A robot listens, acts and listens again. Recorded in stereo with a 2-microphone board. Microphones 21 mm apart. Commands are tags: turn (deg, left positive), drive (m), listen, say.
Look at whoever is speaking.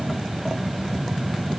<listen/>
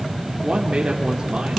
<turn deg="-35"/>
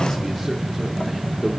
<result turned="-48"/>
<listen/>
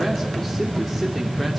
<turn deg="15"/>
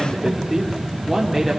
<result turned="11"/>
<say>Found it: a man speaking, straight ahead.</say>